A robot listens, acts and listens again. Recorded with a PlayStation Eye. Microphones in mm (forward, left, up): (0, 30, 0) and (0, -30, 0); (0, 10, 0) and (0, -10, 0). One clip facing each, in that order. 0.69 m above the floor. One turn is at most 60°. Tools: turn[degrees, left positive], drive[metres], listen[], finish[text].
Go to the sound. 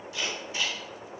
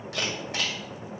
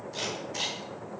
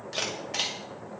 Thought: The camera shutter: about 65° right or 115° right.
Action: turn[-60]
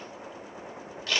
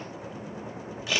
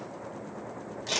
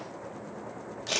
Thought: So it is at 10° right.
Action: turn[-10]
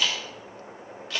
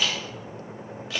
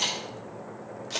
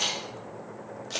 Action: drive[1.0]
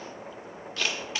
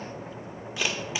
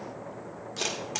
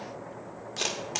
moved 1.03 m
Thought: The camera shutter is now 15° right.
Action: turn[-15]
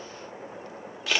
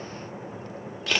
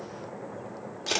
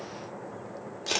Action: drive[1.0]
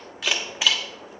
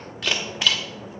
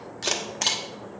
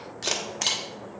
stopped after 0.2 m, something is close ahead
Action: finish[I am next to the camera shutter.]